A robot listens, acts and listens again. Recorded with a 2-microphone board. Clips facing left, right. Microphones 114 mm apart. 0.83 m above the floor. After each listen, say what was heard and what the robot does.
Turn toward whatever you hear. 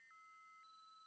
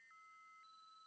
Keep listening.
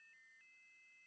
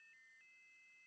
Keep listening.
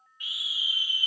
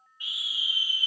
The scream: about 30° right or 150° right. Turn 30° right.
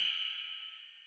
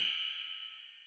Keep listening.
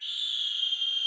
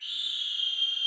So it is at 120° right. Turn 120° right.
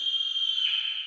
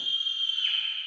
Found it: a scream, straight ahead.